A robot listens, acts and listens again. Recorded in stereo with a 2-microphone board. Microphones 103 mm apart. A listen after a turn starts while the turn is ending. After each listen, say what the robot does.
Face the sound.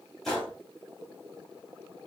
Turn 30° left.
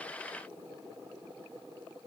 Keep listening.
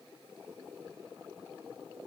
I heard a gunshot, but can't make it out now. It was about 30° right or 150° left.